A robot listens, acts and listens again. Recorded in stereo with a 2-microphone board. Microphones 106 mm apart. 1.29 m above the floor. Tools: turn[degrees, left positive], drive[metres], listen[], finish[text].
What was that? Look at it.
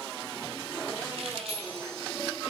Thought: The keys jangling: about 75° right or 105° right.
Action: turn[-75]
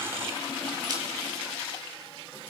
Action: listen[]
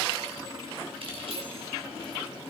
Thought: So it is at 65° right.
Action: turn[-65]
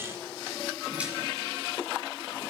Action: listen[]
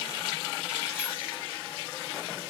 Action: listen[]
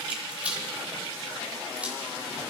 Thought: The keys jangling is now 10° right.
Action: turn[-10]
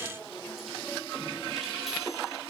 Action: listen[]
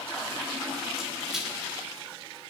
Action: listen[]
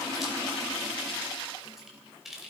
Action: finish[Facing the keys jangling, 2 to 4 m away.]